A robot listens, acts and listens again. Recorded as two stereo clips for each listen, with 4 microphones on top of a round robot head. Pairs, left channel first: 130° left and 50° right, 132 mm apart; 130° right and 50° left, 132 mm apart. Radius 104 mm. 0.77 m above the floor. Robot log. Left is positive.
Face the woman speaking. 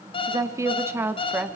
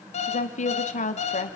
note: The woman speaking: 125° right.
cmd yaw -125
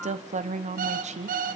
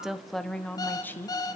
note: The woman speaking is now 60° right.
cmd yaw -60
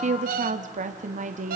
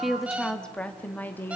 note: The woman speaking is now 60° right.
cmd yaw -60
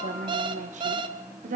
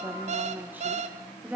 note: The woman speaking is now 30° right.
cmd yaw -30
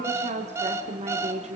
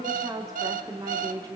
note: The woman speaking is now 15° right.
cmd yaw -15
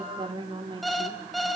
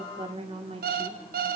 end: Found it: a woman speaking, straight ahead.